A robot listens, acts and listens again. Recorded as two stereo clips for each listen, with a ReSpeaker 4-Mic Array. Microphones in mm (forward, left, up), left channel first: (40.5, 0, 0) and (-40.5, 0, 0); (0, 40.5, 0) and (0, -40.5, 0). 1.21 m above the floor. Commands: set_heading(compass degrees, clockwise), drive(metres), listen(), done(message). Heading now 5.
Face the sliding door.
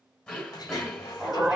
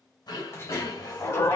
set_heading(330)
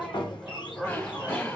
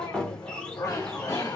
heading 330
set_heading(315)
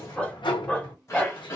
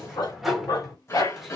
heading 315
done("Facing the sliding door.")